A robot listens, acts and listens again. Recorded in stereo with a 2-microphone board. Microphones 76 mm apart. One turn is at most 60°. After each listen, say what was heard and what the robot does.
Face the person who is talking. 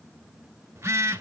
Keep listening.
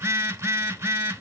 Keep listening.
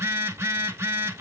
I can't make out anyone speaking, only a phone buzzing.